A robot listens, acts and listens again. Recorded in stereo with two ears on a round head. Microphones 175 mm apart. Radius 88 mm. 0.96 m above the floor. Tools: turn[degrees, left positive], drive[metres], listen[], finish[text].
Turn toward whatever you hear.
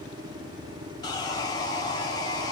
Thought: The sawing: about 20° left or 160° left.
Action: turn[20]
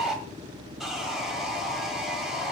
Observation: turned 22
Action: finish[Facing the sawing, 2 to 4 m away.]